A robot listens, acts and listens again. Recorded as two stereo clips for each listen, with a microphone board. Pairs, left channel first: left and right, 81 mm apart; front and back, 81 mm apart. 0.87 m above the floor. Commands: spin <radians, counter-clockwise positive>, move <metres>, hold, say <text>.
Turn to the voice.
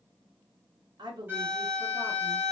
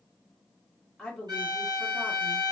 spin -1.40
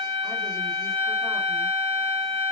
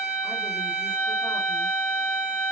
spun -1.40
hold
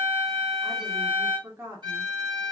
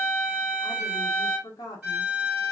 spin -0.52
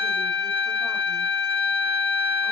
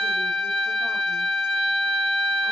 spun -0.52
hold
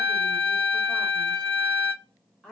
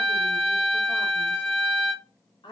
say Found it: a woman speaking, straight ahead, 1 to 2 m away.